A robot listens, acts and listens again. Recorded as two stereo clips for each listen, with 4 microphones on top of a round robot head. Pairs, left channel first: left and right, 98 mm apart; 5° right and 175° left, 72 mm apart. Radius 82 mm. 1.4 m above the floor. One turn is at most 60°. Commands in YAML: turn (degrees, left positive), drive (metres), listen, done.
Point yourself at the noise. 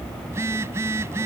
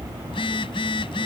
turn: -20
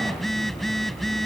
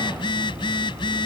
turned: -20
done: "Found it: a phone buzzing, straight ahead."